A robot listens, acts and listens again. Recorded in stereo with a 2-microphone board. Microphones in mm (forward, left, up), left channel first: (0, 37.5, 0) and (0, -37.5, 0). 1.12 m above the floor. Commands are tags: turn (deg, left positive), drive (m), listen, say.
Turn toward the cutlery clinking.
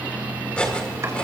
<turn deg="15"/>
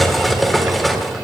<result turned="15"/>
<say>Found it: cutlery clinking, straight ahead, 2 to 4 m away.</say>